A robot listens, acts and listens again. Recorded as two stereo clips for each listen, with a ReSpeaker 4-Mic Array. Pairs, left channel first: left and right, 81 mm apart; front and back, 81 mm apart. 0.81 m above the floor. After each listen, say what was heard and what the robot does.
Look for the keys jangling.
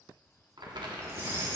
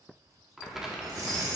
The keys jangling: 145° right. Turn 145° right.
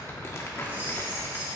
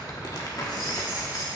The keys jangling is now 30° right. Turn 30° right.
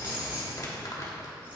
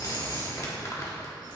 The keys jangling is now 25° right. Turn 25° right.
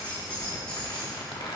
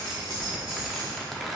The keys jangling is now 10° left. Turn 10° left.
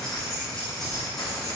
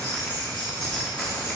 Found it: keys jangling, straight ahead.